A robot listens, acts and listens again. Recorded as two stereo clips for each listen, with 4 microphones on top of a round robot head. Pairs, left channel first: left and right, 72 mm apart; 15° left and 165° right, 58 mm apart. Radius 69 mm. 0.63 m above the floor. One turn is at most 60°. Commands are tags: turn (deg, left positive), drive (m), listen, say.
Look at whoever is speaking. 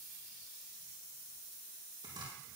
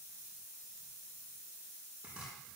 <listen/>
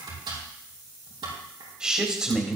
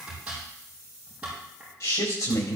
<turn deg="-10"/>
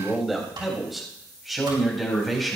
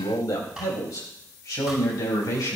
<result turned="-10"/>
<say>Found it: a man speaking, straight ahead.</say>